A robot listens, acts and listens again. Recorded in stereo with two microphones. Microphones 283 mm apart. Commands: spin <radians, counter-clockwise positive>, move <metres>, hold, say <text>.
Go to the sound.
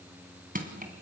spin -0.52
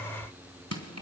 spin -2.01
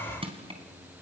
spin -0.35
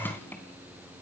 move 1.0
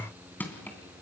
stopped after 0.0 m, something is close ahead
say Blocked. The crushing is further on, straight ahead.